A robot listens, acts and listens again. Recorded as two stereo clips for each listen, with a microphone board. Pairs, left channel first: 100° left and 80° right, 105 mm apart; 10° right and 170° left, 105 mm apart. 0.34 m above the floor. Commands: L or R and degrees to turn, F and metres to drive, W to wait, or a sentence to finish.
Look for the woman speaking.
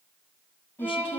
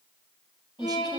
L125
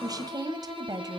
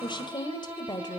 R45
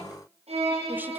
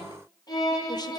W
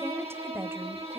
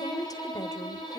R30
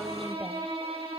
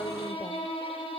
W
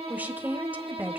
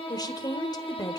R15
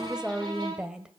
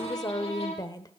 Found it: a woman speaking, straight ahead, 1 to 2 m away.